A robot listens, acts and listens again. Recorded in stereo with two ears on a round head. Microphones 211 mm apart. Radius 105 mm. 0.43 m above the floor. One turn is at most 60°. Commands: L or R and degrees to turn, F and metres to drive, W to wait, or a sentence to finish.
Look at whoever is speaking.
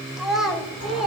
L30
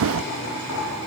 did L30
W
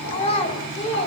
L60
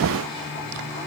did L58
L60
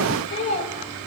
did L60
L35
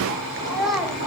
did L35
Facing the child speaking.